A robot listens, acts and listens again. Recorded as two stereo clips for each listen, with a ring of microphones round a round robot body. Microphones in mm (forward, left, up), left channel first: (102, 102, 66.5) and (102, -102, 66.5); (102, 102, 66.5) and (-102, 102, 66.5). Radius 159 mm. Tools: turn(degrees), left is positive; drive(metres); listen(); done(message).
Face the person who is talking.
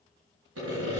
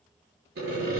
listen()
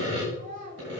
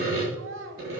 turn(degrees=-150)
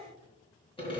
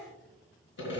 turn(degrees=35)
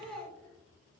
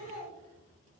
done("Found it: a child speaking, straight ahead, 2 to 4 m away.")